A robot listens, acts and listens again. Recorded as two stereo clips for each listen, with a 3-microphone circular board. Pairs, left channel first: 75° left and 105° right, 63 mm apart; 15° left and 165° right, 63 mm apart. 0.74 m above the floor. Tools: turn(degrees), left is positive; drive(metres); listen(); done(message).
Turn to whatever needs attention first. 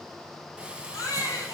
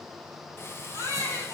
turn(degrees=40)
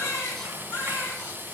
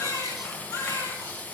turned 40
turn(degrees=25)
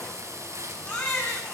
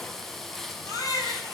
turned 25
done("Facing the baby crying, over 4 m away.")